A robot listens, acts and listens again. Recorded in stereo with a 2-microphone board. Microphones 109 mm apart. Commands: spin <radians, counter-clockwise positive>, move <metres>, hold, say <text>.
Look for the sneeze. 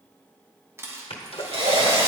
spin 1.05
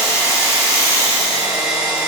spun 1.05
hold
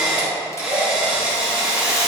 say I heard a sneeze, but can't make it out now. It was about straight ahead or 60° left.